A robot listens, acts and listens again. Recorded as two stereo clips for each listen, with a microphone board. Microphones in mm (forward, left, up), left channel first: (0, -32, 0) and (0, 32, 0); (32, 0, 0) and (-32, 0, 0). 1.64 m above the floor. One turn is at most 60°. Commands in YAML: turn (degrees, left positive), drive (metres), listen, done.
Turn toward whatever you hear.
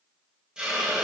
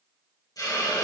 turn: 15
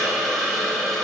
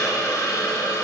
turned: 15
done: "Facing the hiss."